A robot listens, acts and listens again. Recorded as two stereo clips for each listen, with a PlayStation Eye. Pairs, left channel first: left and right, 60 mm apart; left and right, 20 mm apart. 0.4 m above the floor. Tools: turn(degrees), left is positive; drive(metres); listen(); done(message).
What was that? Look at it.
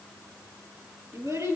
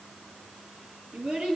turn(degrees=-55)
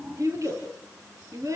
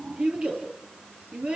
turn(degrees=-65)
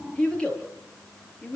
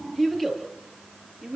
turn(degrees=15)
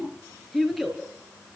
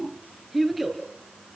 done("Facing the child speaking, over 4 m away.")